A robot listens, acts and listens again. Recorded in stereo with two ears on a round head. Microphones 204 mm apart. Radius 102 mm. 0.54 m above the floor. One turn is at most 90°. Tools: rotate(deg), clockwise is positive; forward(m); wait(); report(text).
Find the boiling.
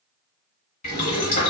rotate(-35)
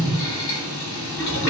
rotate(-90)
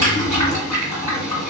rotate(-15)
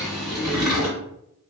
report("Facing the boiling, 1 to 2 m away.")